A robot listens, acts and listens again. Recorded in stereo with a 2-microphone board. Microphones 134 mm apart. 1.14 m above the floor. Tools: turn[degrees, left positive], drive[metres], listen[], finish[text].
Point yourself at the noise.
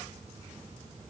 Action: listen[]
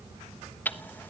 Action: turn[30]
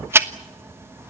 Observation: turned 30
Thought: So it is at 20° right.
Action: turn[-20]
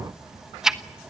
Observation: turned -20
Action: finish[Found it: ticking, straight ahead, 1 to 2 m away.]